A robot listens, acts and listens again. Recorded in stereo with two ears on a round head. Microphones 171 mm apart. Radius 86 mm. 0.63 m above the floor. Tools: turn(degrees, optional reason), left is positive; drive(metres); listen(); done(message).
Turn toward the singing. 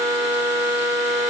listen()
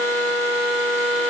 listen()
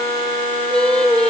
turn(degrees=30)
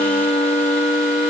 listen()
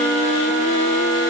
listen()
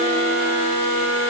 done("I heard singing, but can't make it out now. It was about 25° right or 145° left.")